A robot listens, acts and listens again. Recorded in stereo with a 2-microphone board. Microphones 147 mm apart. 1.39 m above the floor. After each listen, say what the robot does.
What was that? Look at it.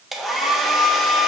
Turn 30° left.
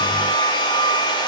Turn 150° left.
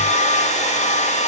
Turn 55° left.
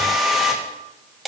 Facing the hair dryer.